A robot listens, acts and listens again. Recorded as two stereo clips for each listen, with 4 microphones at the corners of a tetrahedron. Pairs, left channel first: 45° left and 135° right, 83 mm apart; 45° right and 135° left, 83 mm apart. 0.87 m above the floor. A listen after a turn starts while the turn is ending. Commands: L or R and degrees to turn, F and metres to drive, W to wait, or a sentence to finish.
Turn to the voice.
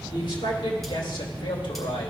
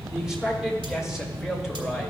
L50
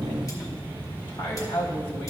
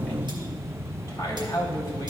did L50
L15
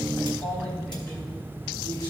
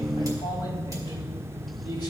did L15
W
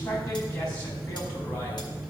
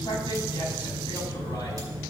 Facing the man speaking.